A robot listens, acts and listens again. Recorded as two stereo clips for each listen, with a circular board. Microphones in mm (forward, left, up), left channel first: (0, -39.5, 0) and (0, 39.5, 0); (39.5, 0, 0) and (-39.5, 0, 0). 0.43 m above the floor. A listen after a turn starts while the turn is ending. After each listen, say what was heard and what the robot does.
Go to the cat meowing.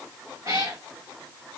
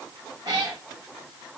The cat meowing: 145° left. Turn 145° left.
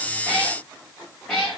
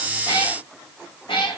Drive 1.0 m forward.
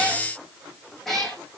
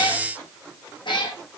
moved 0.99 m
Drive 1.0 m forward.
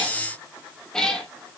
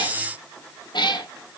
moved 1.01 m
The cat meowing is now 10° right. Turn 10° right.
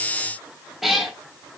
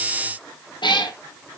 Drive 1.0 m forward.
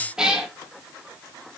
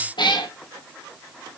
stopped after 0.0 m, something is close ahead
The cat meowing is now 10° left. Turn 10° left.
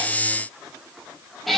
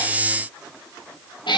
I am next to the cat meowing.